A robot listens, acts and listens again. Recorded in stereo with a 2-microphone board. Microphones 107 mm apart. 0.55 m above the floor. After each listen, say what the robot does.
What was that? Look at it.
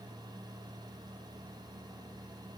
Keep listening.
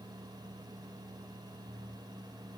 Keep listening.
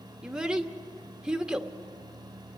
Turn 30° right.
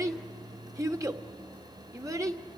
Turn 145° right.
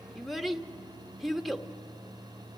Found it: a child speaking, straight ahead.